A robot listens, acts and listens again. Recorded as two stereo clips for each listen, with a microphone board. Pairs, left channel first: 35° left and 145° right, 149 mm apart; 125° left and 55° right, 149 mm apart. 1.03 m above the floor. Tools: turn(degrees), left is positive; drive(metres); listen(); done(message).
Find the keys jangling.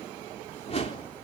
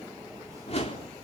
listen()
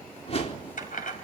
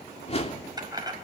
turn(degrees=10)
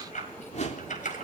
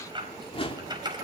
done("Found it: keys jangling, straight ahead, over 4 m away.")